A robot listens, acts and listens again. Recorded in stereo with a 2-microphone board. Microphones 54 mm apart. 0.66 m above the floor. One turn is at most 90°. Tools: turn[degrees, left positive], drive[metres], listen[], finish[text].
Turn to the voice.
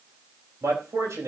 Action: turn[-90]
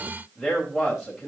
Action: finish[Found it: a man speaking, straight ahead, 2 to 4 m away.]